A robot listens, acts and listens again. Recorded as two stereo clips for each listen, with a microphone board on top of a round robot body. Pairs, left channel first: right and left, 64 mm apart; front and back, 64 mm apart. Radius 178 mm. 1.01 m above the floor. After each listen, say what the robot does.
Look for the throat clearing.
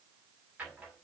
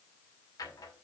Keep listening.
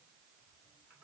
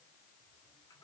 Keep listening.
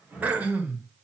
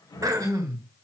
Turn 155° left.
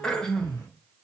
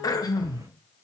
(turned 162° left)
Turn 10° right.
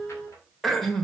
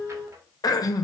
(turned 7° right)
Facing the throat clearing, 1 to 2 m away.